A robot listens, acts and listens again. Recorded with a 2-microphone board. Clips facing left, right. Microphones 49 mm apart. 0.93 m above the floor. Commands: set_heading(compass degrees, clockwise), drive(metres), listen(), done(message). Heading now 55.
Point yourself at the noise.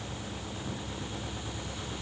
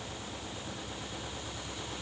listen()
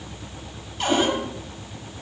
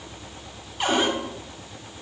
set_heading(85)
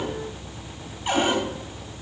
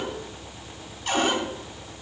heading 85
set_heading(65)
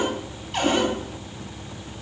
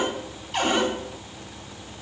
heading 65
done("Facing the cupboard door.")